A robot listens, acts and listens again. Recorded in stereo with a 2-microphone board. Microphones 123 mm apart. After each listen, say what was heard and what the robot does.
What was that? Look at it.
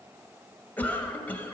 Turn 30° left.
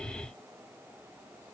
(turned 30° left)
Keep listening.
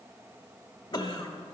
So it is at 130° left. Turn 130° left.
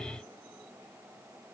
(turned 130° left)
Keep listening.
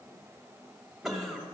Facing the cough, 1 to 2 m away.